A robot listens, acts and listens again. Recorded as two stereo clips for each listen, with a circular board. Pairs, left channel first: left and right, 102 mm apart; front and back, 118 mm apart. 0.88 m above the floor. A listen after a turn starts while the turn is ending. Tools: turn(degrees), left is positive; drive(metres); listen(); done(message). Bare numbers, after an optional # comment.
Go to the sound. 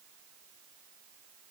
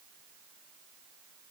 listen()
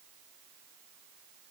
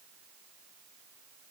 listen()
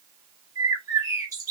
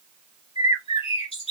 # The bird: 35° right.
turn(-35)
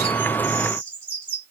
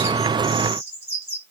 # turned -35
# The bird is now 20° left.
turn(20)
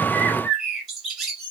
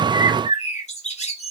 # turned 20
drive(1.0)
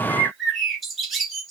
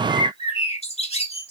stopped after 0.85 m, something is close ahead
done("I am next to the bird.")